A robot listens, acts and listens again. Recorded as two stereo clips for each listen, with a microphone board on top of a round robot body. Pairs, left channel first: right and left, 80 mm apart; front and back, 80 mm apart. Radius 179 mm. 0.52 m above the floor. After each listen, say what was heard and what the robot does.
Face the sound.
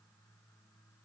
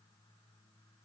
Keep listening.
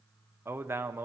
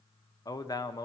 The man speaking: 30° left. Turn 30° left.
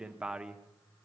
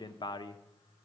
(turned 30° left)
The man speaking is now 10° left. Turn 10° left.
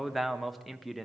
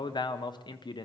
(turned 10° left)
Found it: a man speaking, straight ahead, 1 to 2 m away.